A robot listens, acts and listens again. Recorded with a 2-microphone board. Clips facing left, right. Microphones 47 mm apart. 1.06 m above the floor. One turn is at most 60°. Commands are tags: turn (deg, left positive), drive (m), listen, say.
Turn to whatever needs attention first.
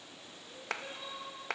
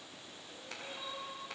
<turn deg="20"/>
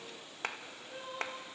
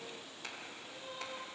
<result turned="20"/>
<turn deg="60"/>
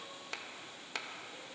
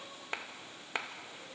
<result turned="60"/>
<turn deg="60"/>
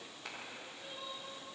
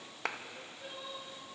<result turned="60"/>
<turn deg="-15"/>
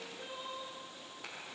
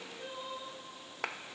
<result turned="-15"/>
<say>Facing the crying.</say>